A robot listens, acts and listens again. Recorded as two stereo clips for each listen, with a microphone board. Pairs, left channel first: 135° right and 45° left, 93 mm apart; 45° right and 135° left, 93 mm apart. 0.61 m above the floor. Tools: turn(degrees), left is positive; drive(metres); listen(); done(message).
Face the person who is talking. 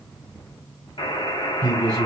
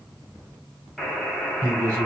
turn(degrees=85)
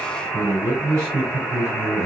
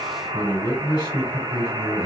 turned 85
done("Found it: a man speaking, straight ahead.")